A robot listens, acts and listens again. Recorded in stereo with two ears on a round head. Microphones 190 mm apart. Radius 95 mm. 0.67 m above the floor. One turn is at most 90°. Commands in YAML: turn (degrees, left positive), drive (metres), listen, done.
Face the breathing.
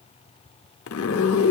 listen: true
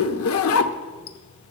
listen: true
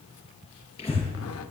turn: 30
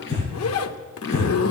turn: 90
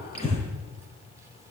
turn: 30
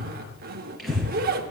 done: "Found it: breathing, straight ahead, over 4 m away."